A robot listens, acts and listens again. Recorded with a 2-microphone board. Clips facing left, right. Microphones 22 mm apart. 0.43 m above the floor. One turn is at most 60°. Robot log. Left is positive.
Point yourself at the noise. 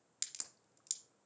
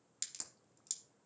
cmd yaw +30
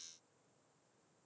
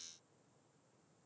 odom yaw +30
cmd idle
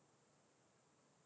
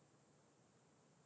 end: I heard a crack, but can't make it out now. It was about 15° right or 135° left.